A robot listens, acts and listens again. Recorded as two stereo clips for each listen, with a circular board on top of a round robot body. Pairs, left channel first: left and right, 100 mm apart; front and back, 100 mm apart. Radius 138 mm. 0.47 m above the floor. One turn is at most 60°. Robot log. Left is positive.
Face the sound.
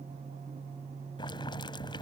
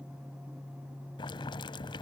note: The boiling: 45° left.
cmd yaw +45
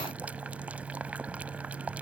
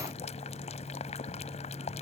note: The boiling is now 10° right.
cmd yaw -10
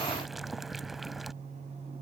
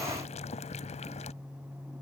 end: Facing the boiling.